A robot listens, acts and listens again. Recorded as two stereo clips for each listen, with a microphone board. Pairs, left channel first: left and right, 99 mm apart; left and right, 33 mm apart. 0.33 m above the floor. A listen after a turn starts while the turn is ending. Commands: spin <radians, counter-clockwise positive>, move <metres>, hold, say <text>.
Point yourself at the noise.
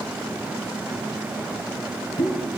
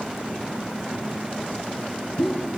spin 1.13
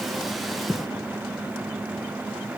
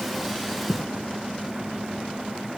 hold
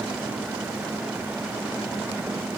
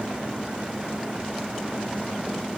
say I heard a pop, but can't make it out now. It was about straight ahead or 50° left.